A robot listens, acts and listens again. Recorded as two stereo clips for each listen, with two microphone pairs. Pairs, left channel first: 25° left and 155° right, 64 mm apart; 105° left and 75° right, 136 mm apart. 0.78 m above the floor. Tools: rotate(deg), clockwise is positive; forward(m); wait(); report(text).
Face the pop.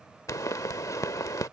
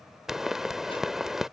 rotate(-10)
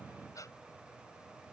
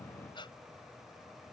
report("I heard a pop from this way, but can't make it out now.")